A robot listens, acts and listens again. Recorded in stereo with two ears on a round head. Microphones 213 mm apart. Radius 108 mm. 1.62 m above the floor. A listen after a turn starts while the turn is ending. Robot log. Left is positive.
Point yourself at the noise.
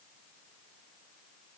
cmd idle
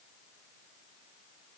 cmd idle
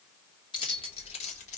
note: The keys jangling: about 30° left or 150° left.
cmd yaw +30
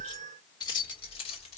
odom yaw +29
note: The keys jangling: about 30° left or 150° left.
cmd yaw +30
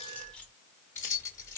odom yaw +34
note: So it is at 10° left.
cmd yaw +10
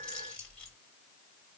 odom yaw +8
end: Facing the keys jangling.